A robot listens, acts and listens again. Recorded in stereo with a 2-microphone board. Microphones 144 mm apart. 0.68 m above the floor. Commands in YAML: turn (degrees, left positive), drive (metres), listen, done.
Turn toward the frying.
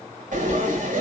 turn: -65
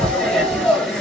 done: "Facing the frying, over 4 m away."